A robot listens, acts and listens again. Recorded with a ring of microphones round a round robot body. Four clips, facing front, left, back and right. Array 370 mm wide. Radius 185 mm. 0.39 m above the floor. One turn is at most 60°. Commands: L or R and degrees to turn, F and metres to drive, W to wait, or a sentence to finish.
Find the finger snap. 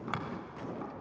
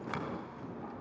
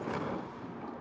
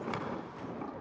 R10
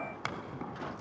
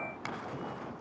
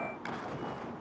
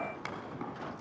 Found it: a finger snap, straight ahead.